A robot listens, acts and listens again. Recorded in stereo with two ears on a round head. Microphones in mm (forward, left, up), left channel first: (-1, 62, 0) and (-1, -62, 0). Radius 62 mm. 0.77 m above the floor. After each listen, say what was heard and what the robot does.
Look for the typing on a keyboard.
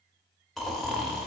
Keep listening.
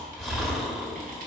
Keep listening.
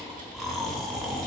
I can't make out typing on a keyboard, only snoring.